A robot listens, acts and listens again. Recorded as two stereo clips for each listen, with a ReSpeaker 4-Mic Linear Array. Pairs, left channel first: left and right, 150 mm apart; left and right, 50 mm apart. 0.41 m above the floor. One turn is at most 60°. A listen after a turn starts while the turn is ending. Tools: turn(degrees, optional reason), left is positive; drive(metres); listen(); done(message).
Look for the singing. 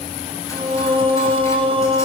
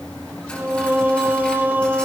turn(degrees=-35, reason="The singing: about 35° right or 145° right.")
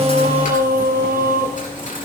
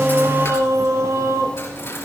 turn(degrees=-60, reason="So it is at 105° right.")
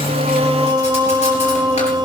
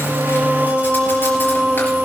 turn(degrees=-30, reason="The singing is now 30° right.")
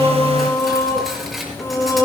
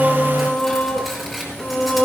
turn(degrees=15, reason="The singing is now 15° left.")
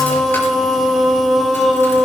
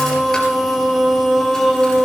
done("Found it: singing, straight ahead, 1 to 2 m away.")